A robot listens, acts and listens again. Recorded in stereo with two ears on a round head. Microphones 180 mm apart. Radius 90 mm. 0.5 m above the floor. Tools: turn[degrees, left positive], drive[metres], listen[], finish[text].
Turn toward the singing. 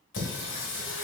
Thought: The singing: about 65° left or 115° left.
Action: turn[65]
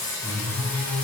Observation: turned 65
Action: finish[Facing the singing, 1 to 2 m away.]